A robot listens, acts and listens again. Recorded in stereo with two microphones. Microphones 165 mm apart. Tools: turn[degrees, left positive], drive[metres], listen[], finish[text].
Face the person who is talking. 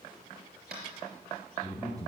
Thought: The man speaking: about 20° right or 160° right.
Action: turn[-20]
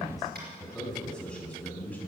Thought: So it is at 10° left.
Action: turn[10]
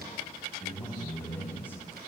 Thought: The man speaking is now 15° left.
Action: turn[15]
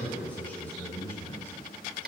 Thought: The man speaking is now 15° left.
Action: turn[15]
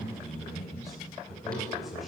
Action: finish[Found it: a man speaking, straight ahead, 2 to 4 m away.]